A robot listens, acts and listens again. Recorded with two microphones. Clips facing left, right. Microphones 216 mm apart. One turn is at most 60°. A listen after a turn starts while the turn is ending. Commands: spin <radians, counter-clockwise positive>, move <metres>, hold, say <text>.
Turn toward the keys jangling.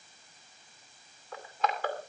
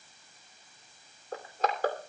hold
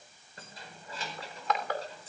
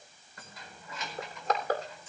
spin 0.61
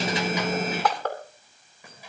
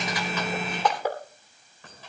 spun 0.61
hold
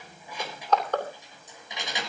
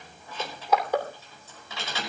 spin 0.26
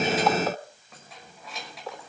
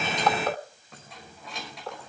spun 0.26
say Found it: keys jangling, straight ahead.